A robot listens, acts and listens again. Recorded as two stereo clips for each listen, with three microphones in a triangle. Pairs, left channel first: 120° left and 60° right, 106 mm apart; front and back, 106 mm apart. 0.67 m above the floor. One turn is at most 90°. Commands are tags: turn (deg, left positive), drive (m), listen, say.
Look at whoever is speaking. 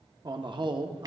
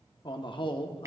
<turn deg="-25"/>
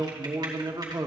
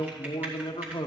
<turn deg="-20"/>
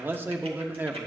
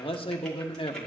<turn deg="10"/>
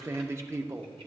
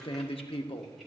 <say>Found it: a man speaking, straight ahead.</say>